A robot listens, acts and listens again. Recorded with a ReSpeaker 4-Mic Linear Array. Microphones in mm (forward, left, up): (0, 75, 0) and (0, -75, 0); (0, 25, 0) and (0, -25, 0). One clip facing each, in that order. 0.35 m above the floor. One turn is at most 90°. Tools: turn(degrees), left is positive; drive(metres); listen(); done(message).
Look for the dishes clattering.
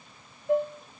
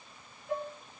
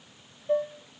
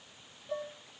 turn(degrees=35)
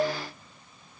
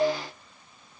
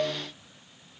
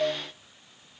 turn(degrees=90)
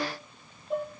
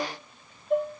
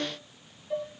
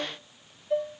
turn(degrees=15)
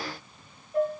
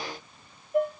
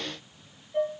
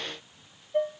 done("Found it: dishes clattering, straight ahead, over 4 m away.")